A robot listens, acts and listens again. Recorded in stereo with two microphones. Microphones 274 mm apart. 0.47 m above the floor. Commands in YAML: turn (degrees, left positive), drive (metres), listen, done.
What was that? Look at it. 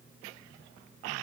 listen: true
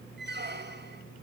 turn: -40
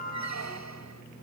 turn: -100
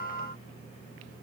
listen: true
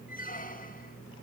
turn: 30
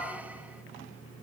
listen: true
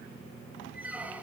done: "Facing the squeak, 1 to 2 m away."